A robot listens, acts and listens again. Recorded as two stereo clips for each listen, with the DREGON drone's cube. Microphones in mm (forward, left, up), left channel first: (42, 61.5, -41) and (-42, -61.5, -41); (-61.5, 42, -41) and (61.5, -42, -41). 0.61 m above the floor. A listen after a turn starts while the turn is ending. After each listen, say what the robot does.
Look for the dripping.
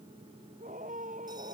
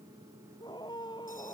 Keep listening.
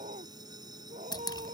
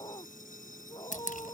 Turn 120° left.
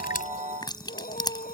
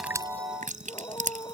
Found it: dripping, straight ahead.